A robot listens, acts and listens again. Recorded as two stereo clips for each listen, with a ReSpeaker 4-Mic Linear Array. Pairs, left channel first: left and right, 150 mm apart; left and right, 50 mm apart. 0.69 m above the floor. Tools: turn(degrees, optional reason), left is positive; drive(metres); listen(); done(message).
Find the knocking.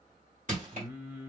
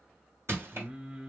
listen()
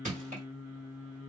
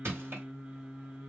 listen()
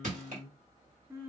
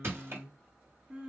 done("I can't make out knocking, only crushing and singing.")